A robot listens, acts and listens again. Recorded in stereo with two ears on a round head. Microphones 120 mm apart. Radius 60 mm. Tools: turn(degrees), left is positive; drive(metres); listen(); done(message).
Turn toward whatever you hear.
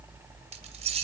turn(degrees=-45)
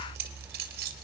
turn(degrees=-75)
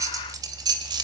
turn(degrees=-30)
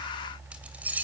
turn(degrees=-10)
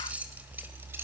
turn(degrees=-10)
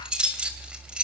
done("Found it: keys jangling, straight ahead.")